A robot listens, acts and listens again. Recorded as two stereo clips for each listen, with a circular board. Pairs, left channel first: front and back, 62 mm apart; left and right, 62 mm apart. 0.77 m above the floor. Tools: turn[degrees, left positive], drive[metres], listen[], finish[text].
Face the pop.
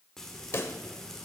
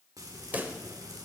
Thought: The pop: 35° right.
Action: turn[-35]
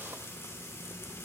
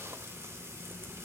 Action: finish[Facing where the pop came from. I can't hear it now.]